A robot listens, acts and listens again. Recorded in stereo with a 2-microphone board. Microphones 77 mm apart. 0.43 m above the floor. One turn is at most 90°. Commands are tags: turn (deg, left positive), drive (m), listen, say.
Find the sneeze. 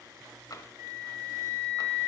<listen/>
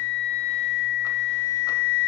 <listen/>
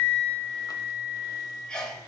<turn deg="30"/>
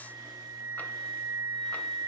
<listen/>
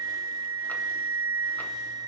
<say>I heard a sneeze, but can't make it out now. It was about 20° right or 140° left.</say>